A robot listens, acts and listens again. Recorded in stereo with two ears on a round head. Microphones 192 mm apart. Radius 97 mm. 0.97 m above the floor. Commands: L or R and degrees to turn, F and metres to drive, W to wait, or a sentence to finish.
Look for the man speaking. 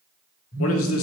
L75
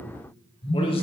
W
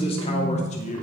L35
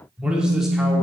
W
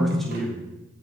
Found it: a man speaking, straight ahead.